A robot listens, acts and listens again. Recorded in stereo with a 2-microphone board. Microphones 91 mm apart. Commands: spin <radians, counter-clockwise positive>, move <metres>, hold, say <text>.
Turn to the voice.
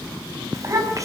spin -0.61
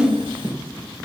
spin -1.92
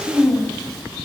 say Facing the child speaking.